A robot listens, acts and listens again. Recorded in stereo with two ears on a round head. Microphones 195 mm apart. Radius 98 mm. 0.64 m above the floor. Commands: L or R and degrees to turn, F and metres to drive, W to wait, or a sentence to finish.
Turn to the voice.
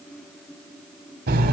W
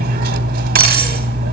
W
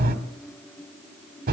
I can't make out anyone speaking, only cutlery clinking.